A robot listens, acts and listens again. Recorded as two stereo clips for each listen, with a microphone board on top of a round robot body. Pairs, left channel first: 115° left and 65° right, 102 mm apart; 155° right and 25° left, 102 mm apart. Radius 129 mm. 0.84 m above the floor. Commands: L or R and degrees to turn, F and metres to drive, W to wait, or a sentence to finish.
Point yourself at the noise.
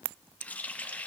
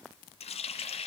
R175
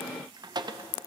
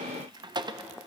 R25
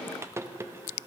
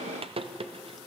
Facing the running tap, under 1 m away.